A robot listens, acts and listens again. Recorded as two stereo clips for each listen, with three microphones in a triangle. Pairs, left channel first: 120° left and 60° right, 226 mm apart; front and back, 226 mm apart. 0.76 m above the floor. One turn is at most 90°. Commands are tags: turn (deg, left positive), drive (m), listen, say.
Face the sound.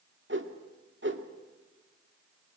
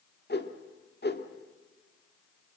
<turn deg="-35"/>
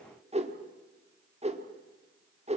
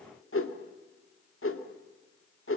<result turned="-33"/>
<say>Facing the whoosh.</say>